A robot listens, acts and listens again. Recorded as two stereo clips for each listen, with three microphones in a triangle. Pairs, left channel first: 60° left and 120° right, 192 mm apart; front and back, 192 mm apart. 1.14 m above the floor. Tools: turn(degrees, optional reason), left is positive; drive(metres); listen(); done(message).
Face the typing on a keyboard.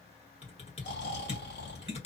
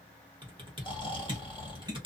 turn(degrees=115, reason="The typing on a keyboard: 115° left.")
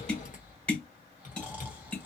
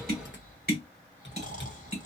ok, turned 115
turn(degrees=10, reason="The typing on a keyboard is now 10° left.")
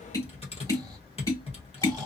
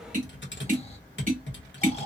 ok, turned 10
done("Found it: typing on a keyboard, straight ahead, 1 to 2 m away.")